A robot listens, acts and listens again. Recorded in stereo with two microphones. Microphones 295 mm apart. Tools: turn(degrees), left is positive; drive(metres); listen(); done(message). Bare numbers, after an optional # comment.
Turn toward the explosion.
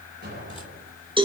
# The explosion: about 30° right or 150° right.
turn(-30)
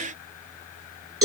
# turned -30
listen()
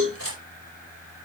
done("I heard an explosion, but can't make it out now. It was about straight ahead or 120° right.")